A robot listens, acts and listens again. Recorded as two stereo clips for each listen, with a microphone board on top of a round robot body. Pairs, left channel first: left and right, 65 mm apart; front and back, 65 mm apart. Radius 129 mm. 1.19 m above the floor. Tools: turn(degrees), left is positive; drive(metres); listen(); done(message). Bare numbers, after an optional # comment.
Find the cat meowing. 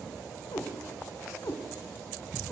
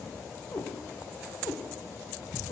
done("Found it: a cat meowing, straight ahead, 1 to 2 m away.")